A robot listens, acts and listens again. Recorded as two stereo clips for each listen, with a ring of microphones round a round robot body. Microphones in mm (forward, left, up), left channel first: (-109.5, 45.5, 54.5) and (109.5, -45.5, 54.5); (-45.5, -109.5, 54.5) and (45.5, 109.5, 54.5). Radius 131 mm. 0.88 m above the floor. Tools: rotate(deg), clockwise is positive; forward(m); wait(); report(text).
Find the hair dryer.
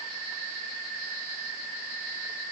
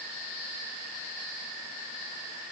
wait()
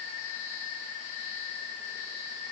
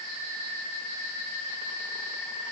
wait()
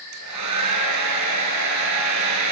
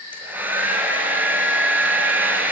rotate(15)
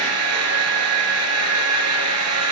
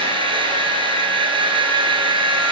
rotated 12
report("Found it: a hair dryer, straight ahead.")